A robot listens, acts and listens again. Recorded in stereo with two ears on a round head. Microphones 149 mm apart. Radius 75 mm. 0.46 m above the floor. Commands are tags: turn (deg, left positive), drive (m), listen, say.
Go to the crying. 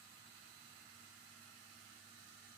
<listen/>
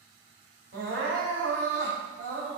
<turn deg="-55"/>
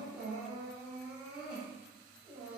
<drive m="1.0"/>
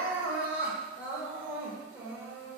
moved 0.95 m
<turn deg="-15"/>
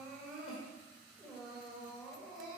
<drive m="1.0"/>
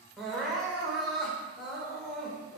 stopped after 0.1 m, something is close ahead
<say>I am next to the crying.</say>